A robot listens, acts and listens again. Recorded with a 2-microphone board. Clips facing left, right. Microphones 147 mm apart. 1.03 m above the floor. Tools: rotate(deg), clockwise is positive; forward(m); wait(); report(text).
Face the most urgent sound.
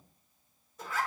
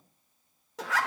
wait()
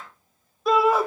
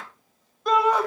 rotate(-30)
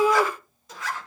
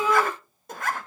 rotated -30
rotate(-145)
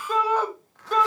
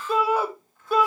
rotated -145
rotate(10)
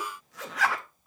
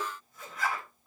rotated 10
report("Found it: a shout, straight ahead.")